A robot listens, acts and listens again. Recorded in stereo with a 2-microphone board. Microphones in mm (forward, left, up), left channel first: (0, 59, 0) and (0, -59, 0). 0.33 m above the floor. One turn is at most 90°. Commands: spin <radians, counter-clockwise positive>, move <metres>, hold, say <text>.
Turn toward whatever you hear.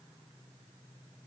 hold
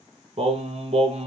spin -1.13
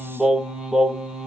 say Found it: singing, straight ahead.